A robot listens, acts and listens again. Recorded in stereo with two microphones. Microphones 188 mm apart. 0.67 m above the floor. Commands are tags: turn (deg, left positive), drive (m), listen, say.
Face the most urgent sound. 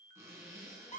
<listen/>
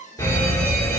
<turn deg="30"/>
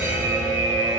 <turn deg="-15"/>
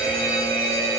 <say>Facing the fire alarm, 2 to 4 m away.</say>